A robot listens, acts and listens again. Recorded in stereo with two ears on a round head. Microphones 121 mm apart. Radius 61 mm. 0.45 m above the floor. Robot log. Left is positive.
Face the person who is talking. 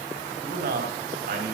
note: The man speaking: about 65° right or 115° right.
cmd yaw -65
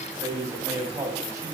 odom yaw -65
note: So it is at 25° right.
cmd yaw -25
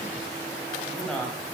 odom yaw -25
end: Facing the man speaking, 2 to 4 m away.